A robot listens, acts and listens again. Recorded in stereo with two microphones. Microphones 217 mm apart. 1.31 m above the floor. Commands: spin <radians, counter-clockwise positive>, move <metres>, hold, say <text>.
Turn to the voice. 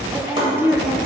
spin -0.52
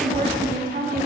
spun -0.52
spin -2.44
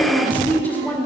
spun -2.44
spin 0.17
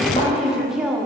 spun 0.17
say Facing the woman speaking, under 1 m away.